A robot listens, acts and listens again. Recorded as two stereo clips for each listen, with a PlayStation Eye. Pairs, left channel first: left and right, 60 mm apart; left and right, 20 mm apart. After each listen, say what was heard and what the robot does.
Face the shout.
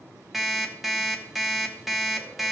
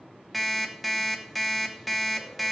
Keep listening.
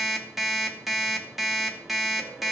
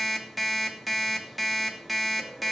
Keep listening.
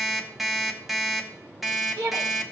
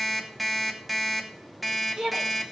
Turn 90° right.
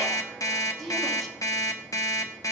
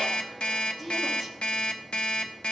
Found it: a shout, straight ahead, 2 to 4 m away.